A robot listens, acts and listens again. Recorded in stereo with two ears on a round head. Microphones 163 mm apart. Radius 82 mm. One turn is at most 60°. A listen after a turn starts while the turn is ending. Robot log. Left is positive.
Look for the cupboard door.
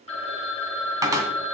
note: The cupboard door: about 20° right or 160° right.
cmd yaw -20
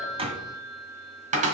note: So it is at 140° right.
cmd yaw -60
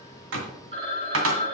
note: The cupboard door is now 95° right.
cmd yaw -60
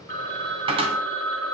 note: The cupboard door is now 30° right.
cmd yaw -30
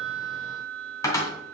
note: The cupboard door is now 15° left.
cmd yaw +15
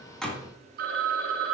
end: Found it: a cupboard door, straight ahead, 2 to 4 m away.